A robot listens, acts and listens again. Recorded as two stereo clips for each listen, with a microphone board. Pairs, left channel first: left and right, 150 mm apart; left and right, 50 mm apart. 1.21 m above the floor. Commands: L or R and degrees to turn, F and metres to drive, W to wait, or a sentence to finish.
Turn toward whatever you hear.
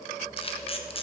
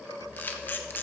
L40
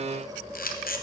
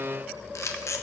L100
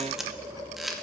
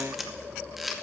Facing the camera shutter.